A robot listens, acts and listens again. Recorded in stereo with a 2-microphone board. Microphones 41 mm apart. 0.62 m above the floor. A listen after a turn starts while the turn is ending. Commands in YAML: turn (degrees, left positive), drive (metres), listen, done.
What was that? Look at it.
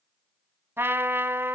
turn: -70
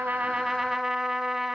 turn: -10
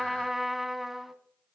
done: "Facing the trumpet, 1 to 2 m away."